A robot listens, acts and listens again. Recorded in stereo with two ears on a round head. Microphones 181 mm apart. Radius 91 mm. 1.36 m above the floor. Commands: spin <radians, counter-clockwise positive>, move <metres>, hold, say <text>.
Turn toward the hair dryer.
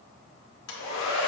spin 1.22
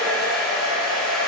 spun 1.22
say Facing the hair dryer.